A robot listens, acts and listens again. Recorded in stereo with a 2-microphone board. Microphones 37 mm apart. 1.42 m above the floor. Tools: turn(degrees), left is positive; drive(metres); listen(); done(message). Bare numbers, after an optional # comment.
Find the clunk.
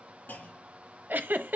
# The clunk: about 55° left or 125° left.
turn(55)
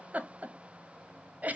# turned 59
listen()
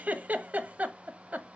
done("I heard a clunk, but can't make it out now. It was about straight ahead or 65° left.")